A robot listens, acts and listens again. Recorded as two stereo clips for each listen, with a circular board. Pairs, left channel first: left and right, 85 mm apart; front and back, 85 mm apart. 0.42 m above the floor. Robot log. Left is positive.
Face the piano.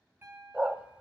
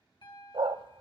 note: The piano: 25° right.
cmd yaw -25
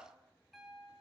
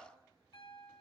end: Found it: a piano, straight ahead, 2 to 4 m away.